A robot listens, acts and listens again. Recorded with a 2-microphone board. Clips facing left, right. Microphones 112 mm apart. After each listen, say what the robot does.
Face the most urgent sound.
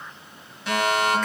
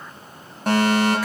Turn 50° right.
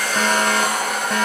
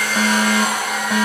Found it: a fire alarm, straight ahead.